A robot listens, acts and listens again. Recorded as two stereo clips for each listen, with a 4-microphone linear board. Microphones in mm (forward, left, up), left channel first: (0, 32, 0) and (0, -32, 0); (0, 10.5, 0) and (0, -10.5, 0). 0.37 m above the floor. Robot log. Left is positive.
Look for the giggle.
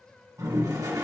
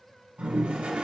cmd idle
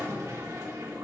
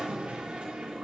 cmd idle
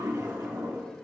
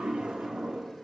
end: I can't make out a giggle, only a toilet flushing.